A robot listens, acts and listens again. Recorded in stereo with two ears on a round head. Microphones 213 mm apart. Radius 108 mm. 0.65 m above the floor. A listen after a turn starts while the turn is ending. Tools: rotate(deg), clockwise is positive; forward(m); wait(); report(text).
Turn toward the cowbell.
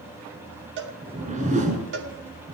rotate(55)
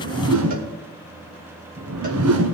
wait()
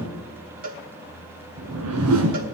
rotate(50)
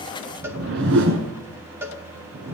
rotate(15)
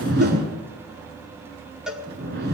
report("Found it: a cowbell, straight ahead, 1 to 2 m away.")